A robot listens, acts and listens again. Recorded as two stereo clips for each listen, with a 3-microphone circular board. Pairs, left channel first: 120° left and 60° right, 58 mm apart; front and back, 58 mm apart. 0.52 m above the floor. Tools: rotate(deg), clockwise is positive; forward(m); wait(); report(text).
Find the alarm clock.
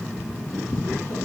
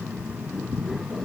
wait()
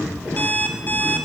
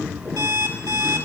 rotate(-175)
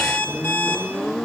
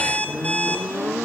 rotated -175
rotate(-65)
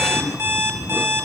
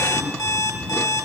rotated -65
rotate(10)
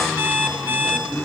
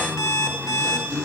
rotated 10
report("Facing the alarm clock, 1 to 2 m away.")